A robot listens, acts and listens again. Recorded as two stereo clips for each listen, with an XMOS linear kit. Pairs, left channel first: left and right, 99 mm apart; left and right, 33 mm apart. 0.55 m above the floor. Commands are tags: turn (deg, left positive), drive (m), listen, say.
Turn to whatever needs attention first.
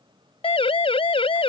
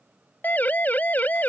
<turn deg="70"/>
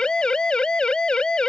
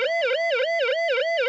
<turn deg="10"/>
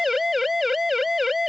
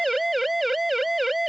<say>Found it: a siren, straight ahead.</say>